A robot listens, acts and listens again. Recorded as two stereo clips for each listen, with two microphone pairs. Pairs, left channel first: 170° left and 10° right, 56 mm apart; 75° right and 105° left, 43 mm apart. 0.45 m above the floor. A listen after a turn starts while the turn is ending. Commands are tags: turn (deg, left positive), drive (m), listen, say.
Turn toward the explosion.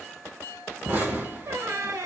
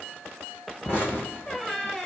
<turn deg="-55"/>
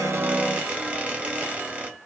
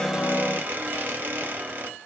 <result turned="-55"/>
<say>Facing where the explosion came from. I can't hear it now.</say>